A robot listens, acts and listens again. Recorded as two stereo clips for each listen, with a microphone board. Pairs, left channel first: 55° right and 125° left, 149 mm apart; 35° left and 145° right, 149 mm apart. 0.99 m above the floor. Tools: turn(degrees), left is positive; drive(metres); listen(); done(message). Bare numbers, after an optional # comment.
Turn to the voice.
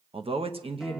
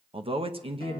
# The man speaking: 170° left.
turn(170)
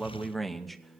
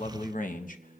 # The man speaking is now 35° left.
turn(35)
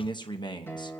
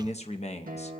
done("Found it: a man speaking, straight ahead, under 1 m away.")